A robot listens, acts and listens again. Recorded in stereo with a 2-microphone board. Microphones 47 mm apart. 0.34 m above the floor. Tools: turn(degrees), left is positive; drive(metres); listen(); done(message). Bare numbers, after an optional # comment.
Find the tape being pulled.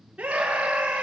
listen()
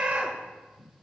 listen()
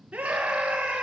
done("I can't make out tape being pulled to turn to.")